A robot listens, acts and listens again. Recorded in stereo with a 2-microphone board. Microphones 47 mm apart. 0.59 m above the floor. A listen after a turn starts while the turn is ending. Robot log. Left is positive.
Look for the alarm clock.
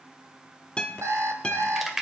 note: The alarm clock: about 75° right or 105° right.
cmd yaw -75
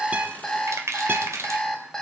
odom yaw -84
note: So it is at 10° left.
cmd yaw +10
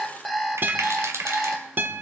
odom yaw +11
end: Found it: an alarm clock, straight ahead.